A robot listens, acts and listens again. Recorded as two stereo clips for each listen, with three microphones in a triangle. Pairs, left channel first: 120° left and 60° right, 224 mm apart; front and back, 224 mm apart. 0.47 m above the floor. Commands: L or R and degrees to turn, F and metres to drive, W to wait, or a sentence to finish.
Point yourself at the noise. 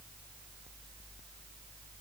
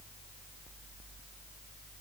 W
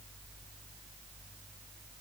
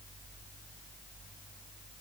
W
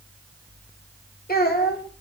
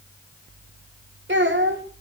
L160
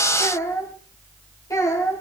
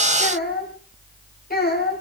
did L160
L45
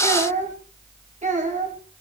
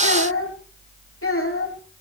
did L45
Facing the child speaking.